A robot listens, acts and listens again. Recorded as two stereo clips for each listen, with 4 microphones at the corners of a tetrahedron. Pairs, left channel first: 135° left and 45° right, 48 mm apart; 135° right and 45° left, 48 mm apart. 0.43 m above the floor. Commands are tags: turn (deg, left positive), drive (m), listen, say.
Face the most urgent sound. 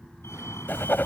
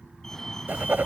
<turn deg="145"/>
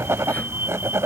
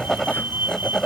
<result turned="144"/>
<say>Facing the fire alarm.</say>